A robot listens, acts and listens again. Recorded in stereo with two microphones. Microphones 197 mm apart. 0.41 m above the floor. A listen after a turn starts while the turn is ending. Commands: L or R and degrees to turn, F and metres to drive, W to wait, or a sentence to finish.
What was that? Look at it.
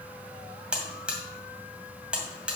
R30
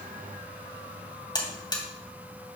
L25
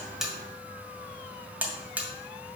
R10
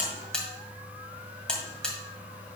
Found it: a buzzer, straight ahead.